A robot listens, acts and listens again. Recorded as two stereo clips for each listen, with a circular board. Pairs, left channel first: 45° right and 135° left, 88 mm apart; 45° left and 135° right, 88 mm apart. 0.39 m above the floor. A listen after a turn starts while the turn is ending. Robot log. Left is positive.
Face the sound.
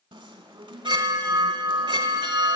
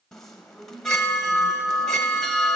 note: The chime: 130° left.
cmd yaw +130
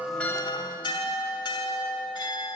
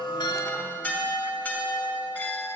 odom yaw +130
note: The chime is now 25° right.
cmd yaw -25
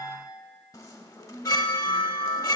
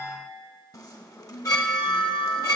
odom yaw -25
end: Facing the chime.